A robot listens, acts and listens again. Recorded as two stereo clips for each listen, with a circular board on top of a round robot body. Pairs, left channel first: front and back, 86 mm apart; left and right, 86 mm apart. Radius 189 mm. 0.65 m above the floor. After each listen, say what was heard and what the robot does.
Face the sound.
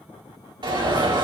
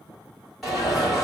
The alarm: straight behind. Turn 180° left.
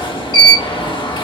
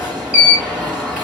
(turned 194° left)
The alarm is now 15° right. Turn 15° right.
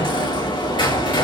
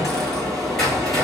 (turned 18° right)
Found it: an alarm, straight ahead.